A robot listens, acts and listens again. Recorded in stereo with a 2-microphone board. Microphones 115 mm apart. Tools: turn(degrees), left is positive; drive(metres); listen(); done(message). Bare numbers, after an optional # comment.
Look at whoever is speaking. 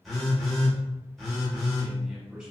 turn(-30)
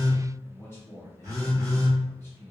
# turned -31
# So it is at 25° left.
turn(25)
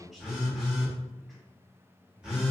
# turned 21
done("Found it: a man speaking, straight ahead.")